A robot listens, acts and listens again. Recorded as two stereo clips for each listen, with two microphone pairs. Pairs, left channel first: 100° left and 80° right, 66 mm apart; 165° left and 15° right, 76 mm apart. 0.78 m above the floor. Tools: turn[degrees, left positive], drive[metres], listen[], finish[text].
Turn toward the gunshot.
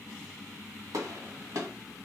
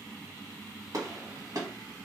Thought: The gunshot: 50° right.
Action: turn[-50]
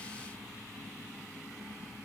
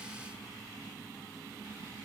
Action: finish[Facing where the gunshot came from. I can't hear it now.]